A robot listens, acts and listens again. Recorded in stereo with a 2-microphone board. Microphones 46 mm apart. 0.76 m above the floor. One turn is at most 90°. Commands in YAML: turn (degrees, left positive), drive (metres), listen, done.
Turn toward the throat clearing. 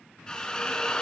listen: true
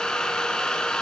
listen: true
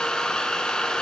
done: "I can't make out throat clearing, only a drill."